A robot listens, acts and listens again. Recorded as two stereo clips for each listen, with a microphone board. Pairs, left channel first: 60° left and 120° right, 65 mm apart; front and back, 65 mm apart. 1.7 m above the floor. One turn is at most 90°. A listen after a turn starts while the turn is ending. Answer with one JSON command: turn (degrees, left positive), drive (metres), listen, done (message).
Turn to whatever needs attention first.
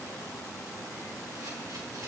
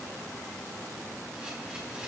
{"listen": true}
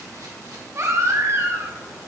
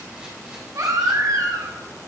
{"turn": -90}
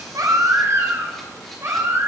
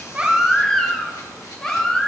{"turn": -80}
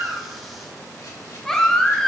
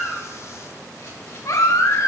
{"turn": -20}
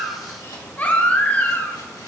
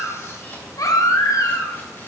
{"done": "Found it: a baby crying, straight ahead, under 1 m away."}